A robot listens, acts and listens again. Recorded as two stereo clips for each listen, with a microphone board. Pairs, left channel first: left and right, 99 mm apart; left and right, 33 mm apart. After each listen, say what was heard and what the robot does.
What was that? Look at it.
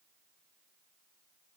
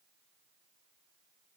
Keep listening.
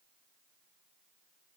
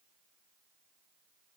Keep listening.
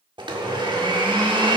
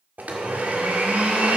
The blender: about 60° right or 120° right. Turn 60° right.
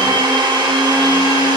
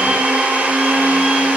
So it is at 55° right. Turn 55° right.
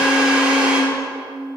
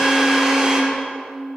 The blender is now 15° right. Turn 15° right.
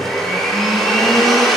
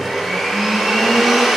Facing the blender, 1 to 2 m away.